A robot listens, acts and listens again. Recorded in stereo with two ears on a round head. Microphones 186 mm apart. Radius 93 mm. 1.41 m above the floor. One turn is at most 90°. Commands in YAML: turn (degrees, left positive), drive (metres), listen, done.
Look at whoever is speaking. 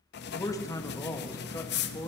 turn: 15
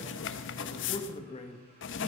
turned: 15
turn: 90
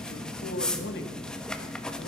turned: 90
turn: 50
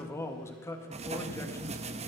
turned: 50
turn: 15
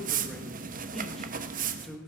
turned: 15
done: "Facing the man speaking."